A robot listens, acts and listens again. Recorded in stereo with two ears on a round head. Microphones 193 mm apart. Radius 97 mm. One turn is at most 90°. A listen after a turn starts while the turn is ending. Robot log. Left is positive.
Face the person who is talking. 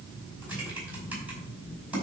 cmd idle
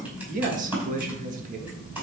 note: The man speaking: about 40° right or 140° right.
cmd yaw -40
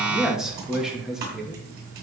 end: Facing the man speaking, 1 to 2 m away.